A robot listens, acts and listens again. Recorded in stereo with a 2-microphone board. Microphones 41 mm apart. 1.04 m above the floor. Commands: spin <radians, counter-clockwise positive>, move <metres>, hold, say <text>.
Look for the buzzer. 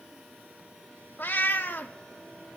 hold
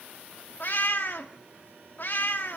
hold
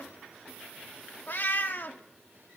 say I can't make out a buzzer to turn to.